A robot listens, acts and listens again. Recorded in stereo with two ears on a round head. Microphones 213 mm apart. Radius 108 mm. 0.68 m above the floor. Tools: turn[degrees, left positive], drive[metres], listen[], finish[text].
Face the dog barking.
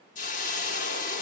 Action: listen[]
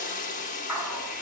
Action: turn[-30]
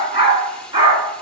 Thought: So it is at 160° right.
Action: turn[-160]
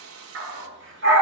Thought: The dog barking is now 50° right.
Action: turn[-50]
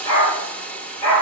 Thought: The dog barking is now 15° left.
Action: turn[15]
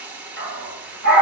Action: finish[Facing the dog barking, 2 to 4 m away.]